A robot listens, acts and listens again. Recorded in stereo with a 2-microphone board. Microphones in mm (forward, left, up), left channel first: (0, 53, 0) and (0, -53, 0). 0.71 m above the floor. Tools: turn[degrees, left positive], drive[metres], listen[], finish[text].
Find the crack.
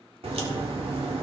Thought: The crack: about 65° right or 115° right.
Action: turn[-65]
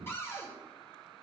Action: listen[]
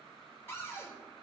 Action: finish[I heard a crack, but can't make it out now. It was about straight ahead or 50° right.]